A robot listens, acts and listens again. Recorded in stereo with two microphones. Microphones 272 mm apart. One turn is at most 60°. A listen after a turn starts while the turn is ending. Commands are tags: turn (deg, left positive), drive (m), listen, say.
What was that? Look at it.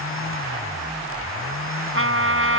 <turn deg="-50"/>
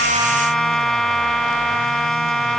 <say>Found it: a trumpet, straight ahead.</say>